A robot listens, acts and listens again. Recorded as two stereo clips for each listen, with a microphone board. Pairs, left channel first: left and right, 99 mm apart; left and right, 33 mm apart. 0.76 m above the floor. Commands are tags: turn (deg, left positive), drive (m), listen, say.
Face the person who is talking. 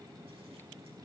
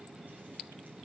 <listen/>
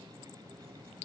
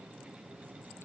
<listen/>
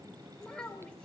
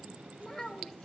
<turn deg="30"/>
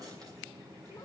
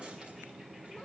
<listen/>
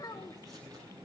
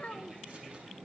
<turn deg="140"/>
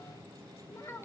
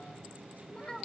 <turn deg="25"/>
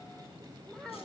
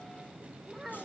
<say>Facing the child speaking, 1 to 2 m away.</say>